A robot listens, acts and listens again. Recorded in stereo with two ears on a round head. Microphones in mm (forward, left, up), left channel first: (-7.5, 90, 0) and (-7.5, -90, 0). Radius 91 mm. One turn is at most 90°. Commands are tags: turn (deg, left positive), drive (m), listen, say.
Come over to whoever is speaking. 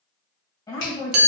<turn deg="20"/>
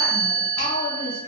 <turn deg="90"/>
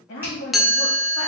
<turn deg="55"/>
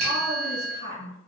<turn deg="30"/>
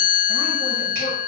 <listen/>
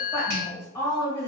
<turn deg="15"/>
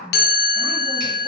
<drive m="1.0"/>
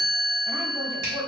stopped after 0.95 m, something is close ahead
<turn deg="-10"/>
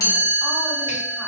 <listen/>
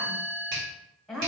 <say>I am next to the woman speaking.</say>